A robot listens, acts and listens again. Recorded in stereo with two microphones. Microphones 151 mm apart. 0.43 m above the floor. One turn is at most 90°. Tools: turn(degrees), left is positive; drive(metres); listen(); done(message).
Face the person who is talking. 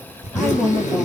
turn(degrees=30)
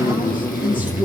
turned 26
turn(degrees=90)
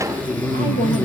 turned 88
turn(degrees=55)
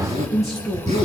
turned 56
done("Facing the woman speaking.")